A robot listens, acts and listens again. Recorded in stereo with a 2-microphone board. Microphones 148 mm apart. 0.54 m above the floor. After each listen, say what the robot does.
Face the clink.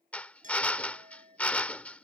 Turn 65° right.
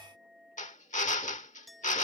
Facing the clink.